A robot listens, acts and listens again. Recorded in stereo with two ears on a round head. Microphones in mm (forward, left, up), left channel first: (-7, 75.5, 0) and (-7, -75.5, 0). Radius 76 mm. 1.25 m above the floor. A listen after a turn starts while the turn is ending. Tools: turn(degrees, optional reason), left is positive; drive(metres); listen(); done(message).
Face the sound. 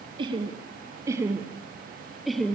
turn(degrees=30)
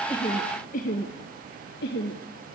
turn(degrees=110, reason="So it is at 110° left.")
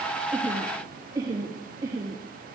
turn(degrees=-20, reason="The laughter is now 20° right.")
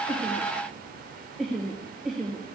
done("Facing the laughter, 2 to 4 m away.")